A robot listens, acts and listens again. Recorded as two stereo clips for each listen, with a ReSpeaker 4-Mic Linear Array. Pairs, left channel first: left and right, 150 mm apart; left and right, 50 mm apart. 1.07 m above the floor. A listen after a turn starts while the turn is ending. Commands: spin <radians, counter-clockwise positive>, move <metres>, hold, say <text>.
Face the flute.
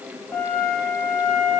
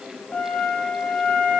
spin 0.44
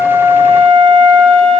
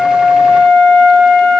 say Found it: a flute, straight ahead.